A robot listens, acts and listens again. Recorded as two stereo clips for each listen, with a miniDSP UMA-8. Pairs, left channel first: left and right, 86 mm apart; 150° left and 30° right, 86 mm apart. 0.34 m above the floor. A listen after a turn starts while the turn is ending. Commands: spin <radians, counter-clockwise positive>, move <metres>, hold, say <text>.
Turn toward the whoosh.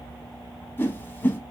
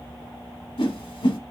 spin 2.71
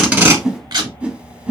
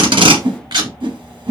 spin -0.26
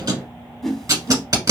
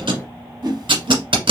say Found it: a whoosh, straight ahead, under 1 m away.